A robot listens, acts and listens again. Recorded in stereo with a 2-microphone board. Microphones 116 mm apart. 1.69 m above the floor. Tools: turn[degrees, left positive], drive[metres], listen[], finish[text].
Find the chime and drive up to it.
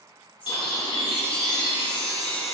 Action: turn[30]
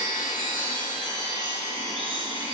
Thought: So it is at 140° left.
Action: turn[140]
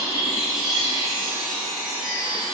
Action: drive[1.0]
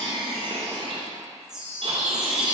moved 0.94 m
Action: drive[1.0]
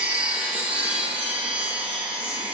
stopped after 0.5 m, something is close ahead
Thought: The chime is now 15° right.
Action: turn[-15]
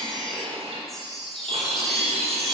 Action: finish[Arrived at the chime, straight ahead.]